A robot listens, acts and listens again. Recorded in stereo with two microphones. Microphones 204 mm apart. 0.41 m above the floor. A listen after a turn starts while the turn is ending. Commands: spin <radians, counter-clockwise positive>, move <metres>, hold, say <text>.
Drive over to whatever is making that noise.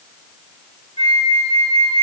spin 0.52
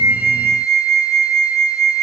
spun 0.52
spin 2.09
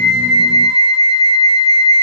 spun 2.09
spin -0.61
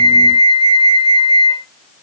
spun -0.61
spin -0.44
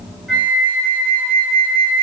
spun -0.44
spin 0.17
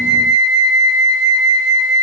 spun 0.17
move 1.0
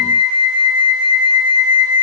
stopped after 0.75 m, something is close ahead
say Arrived at the flute, straight ahead.